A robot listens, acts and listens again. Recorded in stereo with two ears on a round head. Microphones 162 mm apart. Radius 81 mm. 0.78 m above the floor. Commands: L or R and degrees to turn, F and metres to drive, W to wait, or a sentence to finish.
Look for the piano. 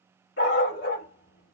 W
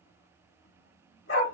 W
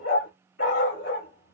I can't make out a piano to turn to.